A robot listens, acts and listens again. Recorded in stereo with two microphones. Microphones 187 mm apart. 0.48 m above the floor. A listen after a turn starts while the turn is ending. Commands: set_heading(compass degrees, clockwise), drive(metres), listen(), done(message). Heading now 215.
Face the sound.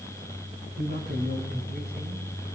set_heading(280)
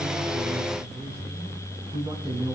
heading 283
set_heading(308)
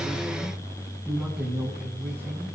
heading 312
set_heading(327)
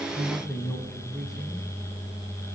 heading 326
done("Found it: a man speaking, straight ahead.")